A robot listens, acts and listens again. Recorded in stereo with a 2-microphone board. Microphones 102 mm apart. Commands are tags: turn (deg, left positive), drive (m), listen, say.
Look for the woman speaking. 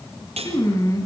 <turn deg="30"/>
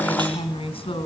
<turn deg="120"/>
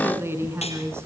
<turn deg="-25"/>
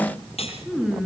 <say>Facing the woman speaking.</say>